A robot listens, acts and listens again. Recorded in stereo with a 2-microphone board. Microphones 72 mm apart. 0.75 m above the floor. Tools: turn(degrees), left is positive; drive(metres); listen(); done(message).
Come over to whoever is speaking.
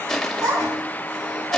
turn(degrees=-55)
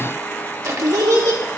turn(degrees=-70)
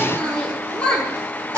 turn(degrees=15)
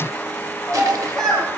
turn(degrees=10)
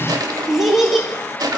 drive(metres=1.0)
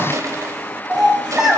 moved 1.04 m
turn(degrees=-10)
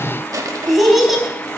drive(metres=1.0)
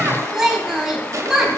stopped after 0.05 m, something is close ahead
done("Blocked. The child speaking is further on, straight ahead.")